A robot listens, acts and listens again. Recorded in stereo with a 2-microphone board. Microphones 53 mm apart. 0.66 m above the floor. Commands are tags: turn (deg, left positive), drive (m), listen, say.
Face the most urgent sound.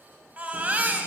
<turn deg="-30"/>
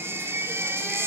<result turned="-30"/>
<turn deg="-125"/>
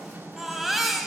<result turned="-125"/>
<say>Facing the baby crying, 2 to 4 m away.</say>